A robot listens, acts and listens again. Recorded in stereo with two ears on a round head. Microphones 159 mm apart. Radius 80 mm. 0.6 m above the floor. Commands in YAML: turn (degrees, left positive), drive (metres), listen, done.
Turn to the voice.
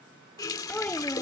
turn: 30
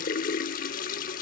listen: true
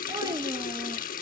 listen: true
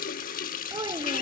turn: -25
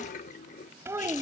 turn: -15
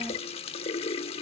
listen: true
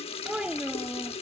done: "Facing the child speaking."